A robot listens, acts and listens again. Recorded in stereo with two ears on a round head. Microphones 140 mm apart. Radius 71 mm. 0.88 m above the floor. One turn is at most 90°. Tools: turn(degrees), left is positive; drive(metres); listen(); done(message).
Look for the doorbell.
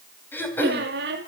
listen()
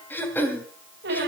listen()
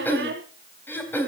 done("I can't make out a doorbell, only throat clearing and a squeak.")